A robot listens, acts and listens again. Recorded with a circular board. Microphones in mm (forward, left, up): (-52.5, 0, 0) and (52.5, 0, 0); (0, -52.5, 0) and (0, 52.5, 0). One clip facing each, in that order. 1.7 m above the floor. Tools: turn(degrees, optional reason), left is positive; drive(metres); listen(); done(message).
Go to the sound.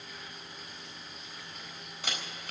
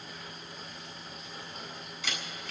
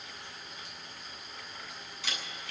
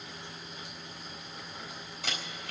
turn(degrees=135, reason="The camera shutter: 135° left.")
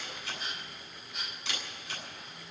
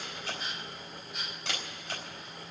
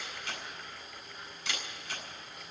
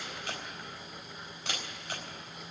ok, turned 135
turn(degrees=50, reason="The camera shutter is now 50° left.")
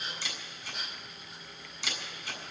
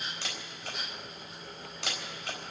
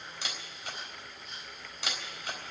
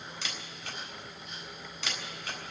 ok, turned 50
turn(degrees=-15, reason="The camera shutter is now 15° right.")
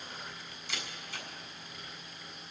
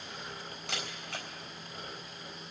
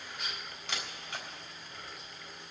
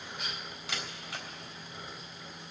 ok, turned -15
drive(metres=1.0)
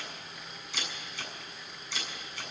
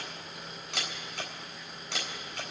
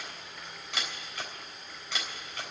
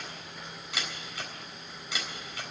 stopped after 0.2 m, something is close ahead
done("Something is in my way. I am facing the camera shutter but have not reached it.")